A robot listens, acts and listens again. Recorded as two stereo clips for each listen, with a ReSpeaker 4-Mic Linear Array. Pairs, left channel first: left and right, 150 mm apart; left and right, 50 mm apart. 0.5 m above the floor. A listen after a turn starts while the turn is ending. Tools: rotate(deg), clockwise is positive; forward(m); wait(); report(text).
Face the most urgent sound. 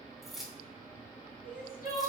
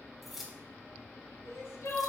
rotate(-65)
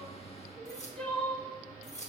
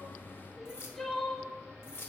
report("Found it: crying, straight ahead, under 1 m away.")